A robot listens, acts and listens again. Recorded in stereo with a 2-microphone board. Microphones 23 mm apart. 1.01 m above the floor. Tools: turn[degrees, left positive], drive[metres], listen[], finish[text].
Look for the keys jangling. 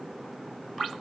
Action: listen[]
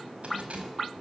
Thought: The keys jangling: about 75° right or 105° right.
Action: turn[-75]
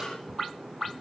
Thought: So it is at 30° right.
Action: turn[-30]
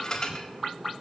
Thought: The keys jangling is now 35° left.
Action: turn[35]
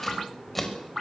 Thought: The keys jangling is now 10° left.
Action: turn[10]
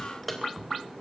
Action: finish[Found it: keys jangling, straight ahead.]